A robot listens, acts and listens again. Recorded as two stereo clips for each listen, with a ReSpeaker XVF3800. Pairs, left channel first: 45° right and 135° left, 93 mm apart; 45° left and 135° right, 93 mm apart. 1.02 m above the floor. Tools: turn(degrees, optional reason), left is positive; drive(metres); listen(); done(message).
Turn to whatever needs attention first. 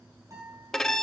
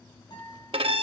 listen()
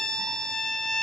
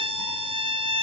listen()
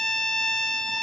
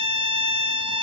done("I can't make out anything urgent, only a guitar and a violin.")